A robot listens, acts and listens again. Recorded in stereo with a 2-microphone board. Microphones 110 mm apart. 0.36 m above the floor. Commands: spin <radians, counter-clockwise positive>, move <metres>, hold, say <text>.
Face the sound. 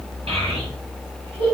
spin -0.87
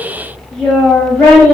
spin 0.17
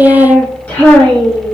spin 0.35
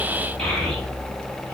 hold
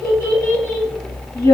spin 0.35
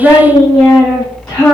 say Found it: a child speaking, straight ahead, 1 to 2 m away.